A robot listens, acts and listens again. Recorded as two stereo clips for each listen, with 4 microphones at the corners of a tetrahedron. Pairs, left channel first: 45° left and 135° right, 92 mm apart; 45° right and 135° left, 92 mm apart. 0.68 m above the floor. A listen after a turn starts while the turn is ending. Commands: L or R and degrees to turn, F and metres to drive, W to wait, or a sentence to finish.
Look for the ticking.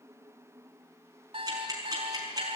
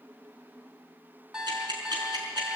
L175
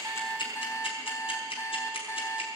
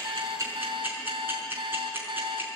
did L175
L65
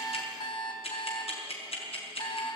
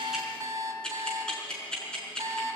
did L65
L35
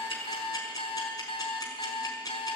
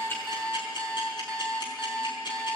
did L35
Found it: ticking, straight ahead, over 4 m away.